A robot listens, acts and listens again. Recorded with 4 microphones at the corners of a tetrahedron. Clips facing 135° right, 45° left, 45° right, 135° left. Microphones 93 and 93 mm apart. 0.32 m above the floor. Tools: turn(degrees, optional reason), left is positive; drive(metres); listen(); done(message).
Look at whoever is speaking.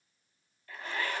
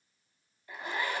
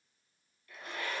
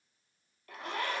listen()
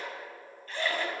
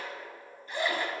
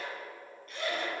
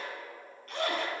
listen()
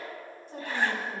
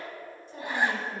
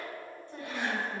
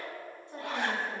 turn(degrees=-165, reason="The woman speaking: 165° right.")
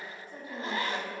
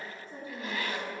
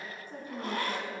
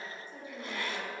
turn(degrees=-15, reason="The woman speaking is now 15° right.")
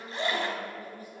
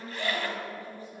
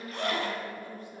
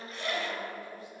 turn(degrees=-10, reason="The woman speaking is now 10° right.")
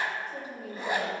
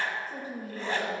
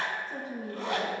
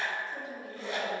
done("Facing the woman speaking.")